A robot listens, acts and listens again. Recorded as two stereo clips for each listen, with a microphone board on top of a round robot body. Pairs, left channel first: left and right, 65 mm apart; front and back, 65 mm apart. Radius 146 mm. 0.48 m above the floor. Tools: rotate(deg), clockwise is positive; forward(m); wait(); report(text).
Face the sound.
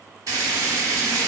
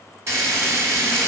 rotate(135)
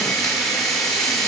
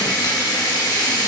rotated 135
report("Found it: frying, straight ahead.")